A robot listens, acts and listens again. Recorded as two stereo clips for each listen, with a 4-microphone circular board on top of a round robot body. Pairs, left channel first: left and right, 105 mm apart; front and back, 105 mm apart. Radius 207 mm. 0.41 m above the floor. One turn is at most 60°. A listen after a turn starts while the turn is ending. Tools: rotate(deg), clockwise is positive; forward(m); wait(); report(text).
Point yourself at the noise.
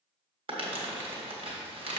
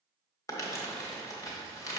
rotate(60)
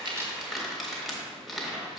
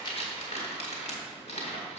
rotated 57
report("Facing the crumpling, 1 to 2 m away.")